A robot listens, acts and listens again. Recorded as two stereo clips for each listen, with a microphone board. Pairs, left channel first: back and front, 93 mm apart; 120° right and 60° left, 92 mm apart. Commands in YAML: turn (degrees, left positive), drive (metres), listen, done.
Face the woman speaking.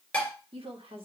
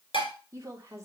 done: "Facing the woman speaking."